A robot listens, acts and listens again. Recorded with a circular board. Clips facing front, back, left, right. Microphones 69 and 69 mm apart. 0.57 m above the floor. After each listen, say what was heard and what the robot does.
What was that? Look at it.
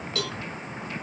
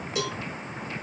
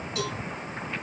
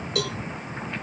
The cowbell: 105° right. Turn 105° right.
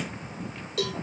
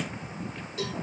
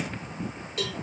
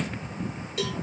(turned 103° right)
Facing the cowbell, 1 to 2 m away.